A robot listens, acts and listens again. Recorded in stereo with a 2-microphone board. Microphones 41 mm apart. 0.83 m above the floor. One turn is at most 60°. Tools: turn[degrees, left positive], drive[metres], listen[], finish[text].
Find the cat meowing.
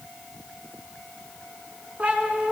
Thought: The cat meowing: about 35° right or 145° right.
Action: turn[-35]
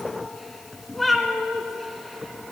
Action: finish[Facing the cat meowing, 1 to 2 m away.]